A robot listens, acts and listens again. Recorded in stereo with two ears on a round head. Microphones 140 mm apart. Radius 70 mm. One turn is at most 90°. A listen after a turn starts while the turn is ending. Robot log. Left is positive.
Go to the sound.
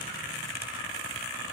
cmd idle
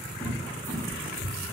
note: The cupboard door: about 20° left or 160° left.
cmd yaw +20
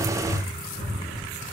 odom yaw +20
note: So it is at 140° left.
cmd yaw +90
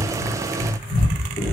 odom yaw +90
note: The cupboard door is now 40° left.
cmd yaw +40
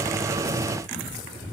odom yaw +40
cmd idle
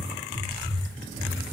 note: The cupboard door is now 10° right.
cmd yaw -10
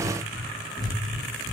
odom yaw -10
cmd fwd 1.0
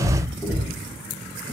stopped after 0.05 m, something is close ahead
end: Blocked. The cupboard door is further on, straight ahead.